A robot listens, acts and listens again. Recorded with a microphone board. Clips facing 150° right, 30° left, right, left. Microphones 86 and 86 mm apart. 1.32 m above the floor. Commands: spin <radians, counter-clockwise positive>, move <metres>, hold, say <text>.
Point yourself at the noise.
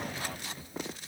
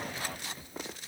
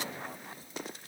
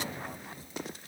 hold
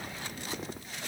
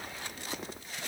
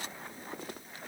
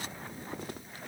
hold
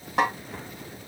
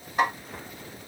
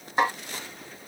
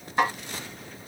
spin -2.79
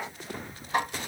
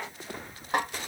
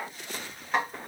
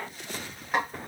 say Found it: a snare drum, straight ahead, 2 to 4 m away.